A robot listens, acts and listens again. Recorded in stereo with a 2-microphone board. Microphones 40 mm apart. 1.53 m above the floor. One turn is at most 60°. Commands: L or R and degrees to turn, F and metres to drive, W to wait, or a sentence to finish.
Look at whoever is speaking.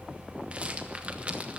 W
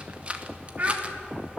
R45
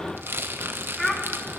Found it: a child speaking, straight ahead.